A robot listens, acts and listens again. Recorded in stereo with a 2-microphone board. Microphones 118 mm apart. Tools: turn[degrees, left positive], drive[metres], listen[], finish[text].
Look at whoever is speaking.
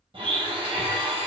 Action: listen[]
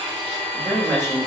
Thought: The woman speaking: about 20° left or 160° left.
Action: turn[20]
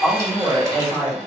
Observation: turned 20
Action: finish[Found it: a woman speaking, straight ahead.]